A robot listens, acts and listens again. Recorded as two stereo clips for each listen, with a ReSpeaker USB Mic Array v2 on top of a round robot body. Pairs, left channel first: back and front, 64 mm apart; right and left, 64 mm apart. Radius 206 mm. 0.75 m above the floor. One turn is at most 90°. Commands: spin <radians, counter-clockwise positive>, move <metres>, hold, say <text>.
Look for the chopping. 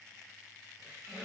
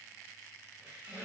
hold
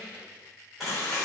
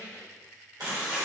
spin 1.57
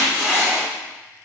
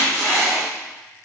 say Found it: chopping, straight ahead, 1 to 2 m away.